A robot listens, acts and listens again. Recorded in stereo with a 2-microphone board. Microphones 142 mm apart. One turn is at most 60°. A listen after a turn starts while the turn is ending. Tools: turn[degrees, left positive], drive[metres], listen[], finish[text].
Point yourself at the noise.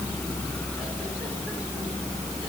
Action: listen[]
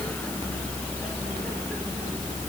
Action: listen[]
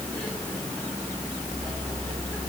Action: finish[I can't make out anything.]